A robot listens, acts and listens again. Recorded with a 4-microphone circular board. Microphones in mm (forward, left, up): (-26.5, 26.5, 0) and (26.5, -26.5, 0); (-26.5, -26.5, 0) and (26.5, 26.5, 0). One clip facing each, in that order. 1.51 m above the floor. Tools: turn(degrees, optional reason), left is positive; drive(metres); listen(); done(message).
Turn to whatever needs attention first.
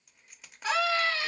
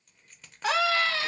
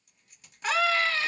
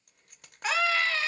turn(degrees=-45, reason="The scream: 45° right.")
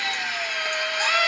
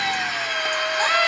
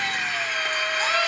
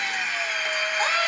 done("Found it: a scream, straight ahead.")